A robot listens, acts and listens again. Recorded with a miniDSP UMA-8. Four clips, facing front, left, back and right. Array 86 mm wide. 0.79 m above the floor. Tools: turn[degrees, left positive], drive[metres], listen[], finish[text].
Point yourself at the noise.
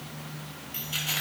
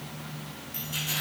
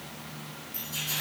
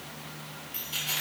Thought: The keys jangling: 10° right.
Action: turn[-10]
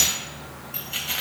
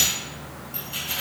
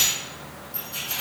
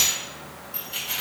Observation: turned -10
Action: finish[Found it: keys jangling, straight ahead.]